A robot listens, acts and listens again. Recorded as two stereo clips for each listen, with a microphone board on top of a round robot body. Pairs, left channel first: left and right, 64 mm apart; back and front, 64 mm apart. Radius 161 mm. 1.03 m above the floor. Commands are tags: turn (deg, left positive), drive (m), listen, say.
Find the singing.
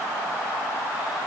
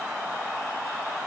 <listen/>
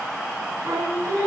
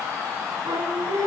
<turn deg="-35"/>
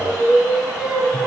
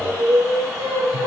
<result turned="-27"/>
<turn deg="-10"/>
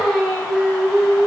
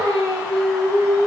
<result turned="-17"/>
<turn deg="10"/>
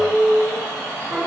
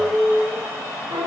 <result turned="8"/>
<say>Facing the singing, over 4 m away.</say>